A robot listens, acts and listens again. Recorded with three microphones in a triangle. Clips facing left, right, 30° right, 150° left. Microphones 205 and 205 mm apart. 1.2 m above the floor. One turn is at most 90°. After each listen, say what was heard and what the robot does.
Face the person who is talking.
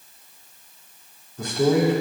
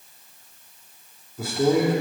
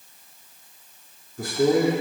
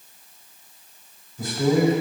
Facing the man speaking.